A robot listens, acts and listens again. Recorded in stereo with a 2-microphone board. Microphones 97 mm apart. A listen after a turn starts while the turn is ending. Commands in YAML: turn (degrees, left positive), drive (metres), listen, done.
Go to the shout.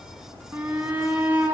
turn: -15
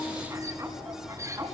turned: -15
turn: -150
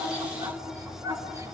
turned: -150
turn: -30
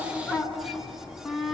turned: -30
drive: 1.0
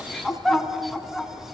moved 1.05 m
drive: 1.0
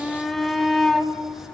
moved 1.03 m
drive: 1.0
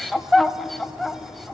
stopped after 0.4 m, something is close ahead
done: "Arrived at the shout, straight ahead."